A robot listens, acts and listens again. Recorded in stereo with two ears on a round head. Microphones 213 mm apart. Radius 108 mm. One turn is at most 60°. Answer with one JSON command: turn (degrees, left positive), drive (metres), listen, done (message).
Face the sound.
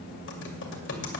{"turn": 55}
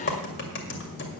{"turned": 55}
{"turn": 60}
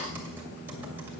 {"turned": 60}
{"listen": true}
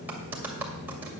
{"turn": -10}
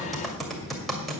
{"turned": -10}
{"done": "Facing the typing on a keyboard."}